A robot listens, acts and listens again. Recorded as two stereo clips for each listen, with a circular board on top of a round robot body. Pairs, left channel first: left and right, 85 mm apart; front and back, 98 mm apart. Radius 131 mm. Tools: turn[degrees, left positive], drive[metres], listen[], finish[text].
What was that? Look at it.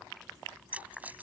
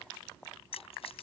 Thought: The keys jangling: 20° right.
Action: turn[-20]
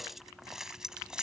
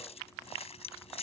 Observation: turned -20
Thought: The keys jangling is now 10° right.
Action: turn[-10]
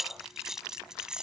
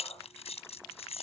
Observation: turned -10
Thought: The keys jangling is now 10° right.
Action: turn[-10]
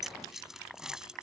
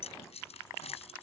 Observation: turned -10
Action: finish[Found it: keys jangling, straight ahead.]